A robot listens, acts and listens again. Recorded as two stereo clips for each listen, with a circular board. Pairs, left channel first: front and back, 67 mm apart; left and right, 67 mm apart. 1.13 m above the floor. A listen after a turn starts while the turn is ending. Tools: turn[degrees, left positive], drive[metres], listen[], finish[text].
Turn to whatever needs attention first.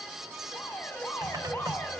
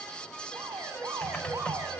Thought: The alarm: 55° right.
Action: turn[-55]
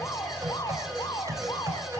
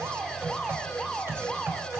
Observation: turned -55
Action: finish[Facing the alarm.]